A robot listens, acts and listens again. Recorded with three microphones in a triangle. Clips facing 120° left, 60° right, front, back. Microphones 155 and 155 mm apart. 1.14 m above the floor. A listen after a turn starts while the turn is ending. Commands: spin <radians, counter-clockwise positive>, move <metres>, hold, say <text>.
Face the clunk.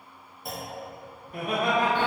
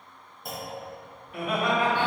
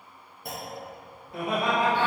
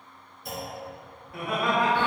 spin 0.52
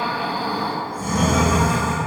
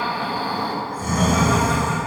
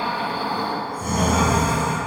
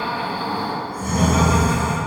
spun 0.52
say I heard a clunk from this way, but can't make it out now.